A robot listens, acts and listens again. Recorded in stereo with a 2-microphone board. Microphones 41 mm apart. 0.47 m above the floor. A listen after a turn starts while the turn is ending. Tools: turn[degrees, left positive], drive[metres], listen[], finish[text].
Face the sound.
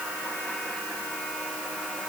Action: listen[]
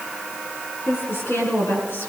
Action: turn[90]
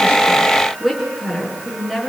Action: finish[Found it: a woman speaking, straight ahead, over 4 m away.]